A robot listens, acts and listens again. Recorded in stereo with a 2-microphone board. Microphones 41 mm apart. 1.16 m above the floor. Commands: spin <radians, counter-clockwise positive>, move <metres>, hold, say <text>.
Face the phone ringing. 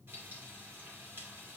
hold
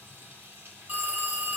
spin -0.79
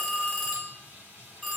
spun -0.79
say Facing the phone ringing, 2 to 4 m away.